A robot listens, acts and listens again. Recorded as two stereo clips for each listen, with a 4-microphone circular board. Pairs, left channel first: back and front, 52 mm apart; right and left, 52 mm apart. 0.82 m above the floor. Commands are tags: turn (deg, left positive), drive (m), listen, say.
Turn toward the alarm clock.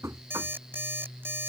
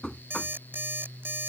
<turn deg="40"/>
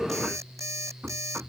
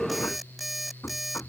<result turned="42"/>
<say>Found it: an alarm clock, straight ahead.</say>